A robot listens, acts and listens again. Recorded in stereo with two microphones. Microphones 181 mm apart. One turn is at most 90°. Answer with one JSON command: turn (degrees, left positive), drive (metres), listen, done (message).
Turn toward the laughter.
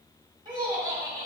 {"turn": -15}
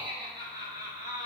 {"turn": -30}
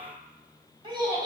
{"turn": -20}
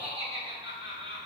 {"turn": -25}
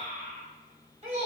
{"turn": -90}
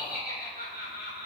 {"turn": -65}
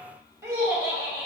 {"turn": -15}
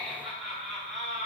{"done": "Facing the laughter."}